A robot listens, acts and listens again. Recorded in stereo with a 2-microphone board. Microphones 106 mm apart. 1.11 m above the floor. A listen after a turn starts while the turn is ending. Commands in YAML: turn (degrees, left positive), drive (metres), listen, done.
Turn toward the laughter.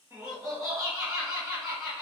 turn: -30
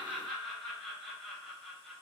done: "Found it: laughter, straight ahead, 1 to 2 m away."